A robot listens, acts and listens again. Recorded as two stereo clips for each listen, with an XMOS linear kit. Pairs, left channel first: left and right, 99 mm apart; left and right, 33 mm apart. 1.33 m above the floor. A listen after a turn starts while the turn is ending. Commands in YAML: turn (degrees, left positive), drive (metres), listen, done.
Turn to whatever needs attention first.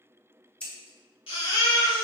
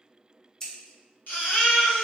turn: 65
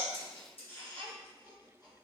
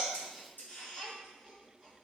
listen: true
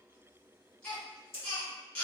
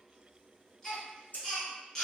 turn: 15
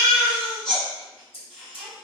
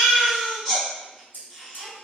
done: "Found it: a baby crying, straight ahead."